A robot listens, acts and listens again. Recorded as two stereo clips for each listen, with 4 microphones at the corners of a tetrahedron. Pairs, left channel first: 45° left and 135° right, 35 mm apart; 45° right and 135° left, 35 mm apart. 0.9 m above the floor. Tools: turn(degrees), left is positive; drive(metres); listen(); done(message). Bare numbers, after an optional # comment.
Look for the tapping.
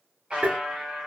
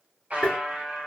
# The tapping: 95° right.
turn(-95)
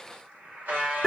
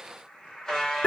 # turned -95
# The tapping is now 25° right.
turn(-25)
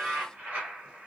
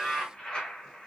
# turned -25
# The tapping is now 15° right.
turn(-15)
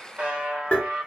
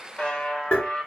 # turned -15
done("Facing the tapping, 1 to 2 m away.")